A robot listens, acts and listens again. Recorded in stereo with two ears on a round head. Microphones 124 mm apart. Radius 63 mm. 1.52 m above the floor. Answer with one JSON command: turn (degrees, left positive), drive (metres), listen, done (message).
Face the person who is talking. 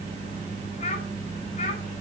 {"turn": 50}
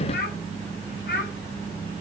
{"turn": 75}
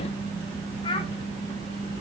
{"turn": 35}
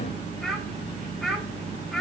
{"done": "Facing the child speaking."}